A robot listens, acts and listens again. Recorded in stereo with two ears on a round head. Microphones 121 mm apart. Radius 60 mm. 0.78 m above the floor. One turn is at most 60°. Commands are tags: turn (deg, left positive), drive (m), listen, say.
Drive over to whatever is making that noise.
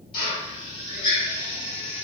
<turn deg="35"/>
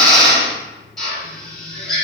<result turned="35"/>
<drive m="1.0"/>
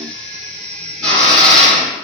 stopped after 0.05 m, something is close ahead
<turn deg="10"/>
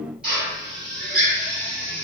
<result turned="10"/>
<say>Blocked. The drill is further on, straight ahead.</say>